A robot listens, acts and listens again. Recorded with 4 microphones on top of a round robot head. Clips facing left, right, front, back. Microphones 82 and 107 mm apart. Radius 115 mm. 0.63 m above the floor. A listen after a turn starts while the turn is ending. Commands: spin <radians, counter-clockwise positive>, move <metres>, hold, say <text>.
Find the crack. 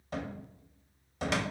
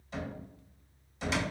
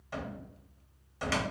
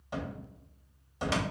hold
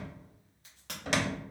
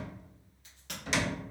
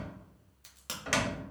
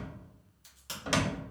spin 0.52
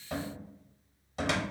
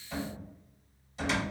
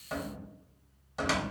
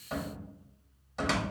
say I heard a crack from this way, but can't make it out now.